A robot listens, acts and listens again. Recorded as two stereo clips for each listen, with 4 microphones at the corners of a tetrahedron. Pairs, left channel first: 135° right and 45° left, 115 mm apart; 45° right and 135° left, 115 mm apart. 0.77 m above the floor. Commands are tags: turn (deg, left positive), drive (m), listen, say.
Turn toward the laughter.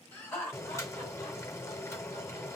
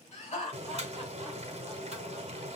<turn deg="-65"/>
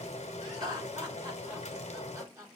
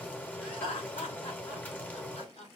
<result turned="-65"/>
<turn deg="-20"/>
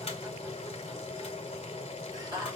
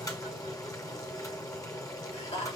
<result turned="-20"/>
<turn deg="-10"/>
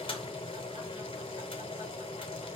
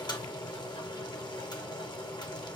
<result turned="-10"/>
<listen/>
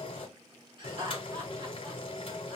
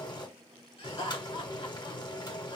<say>Found it: laughter, straight ahead, 2 to 4 m away.</say>